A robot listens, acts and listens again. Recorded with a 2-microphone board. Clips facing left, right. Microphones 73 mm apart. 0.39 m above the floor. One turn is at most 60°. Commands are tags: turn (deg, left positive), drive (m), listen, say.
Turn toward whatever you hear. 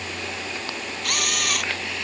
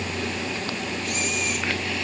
<turn deg="60"/>
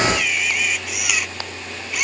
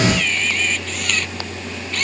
<turn deg="10"/>
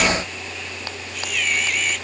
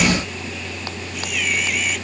<listen/>
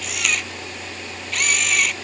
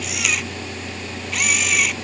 <say>Found it: a camera shutter, straight ahead.</say>